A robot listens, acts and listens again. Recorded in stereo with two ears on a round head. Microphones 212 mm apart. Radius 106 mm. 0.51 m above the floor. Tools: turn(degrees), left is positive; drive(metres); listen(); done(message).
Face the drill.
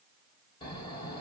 listen()
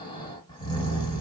listen()
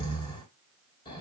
done("I can't make out a drill to turn to.")